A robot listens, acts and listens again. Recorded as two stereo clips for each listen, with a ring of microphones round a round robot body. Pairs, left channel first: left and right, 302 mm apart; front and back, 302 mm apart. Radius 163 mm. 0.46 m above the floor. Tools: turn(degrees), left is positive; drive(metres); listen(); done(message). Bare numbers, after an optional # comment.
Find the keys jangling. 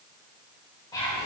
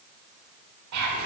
listen()
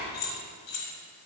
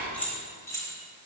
# The keys jangling: 80° left.
turn(80)
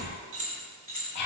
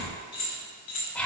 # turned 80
# The keys jangling is now 30° right.
turn(-30)
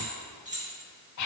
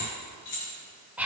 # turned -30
# The keys jangling is now 25° right.
turn(-25)
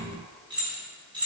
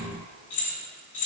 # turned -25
# The keys jangling is now 15° right.
turn(-15)
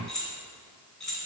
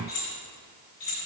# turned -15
done("Found it: keys jangling, straight ahead.")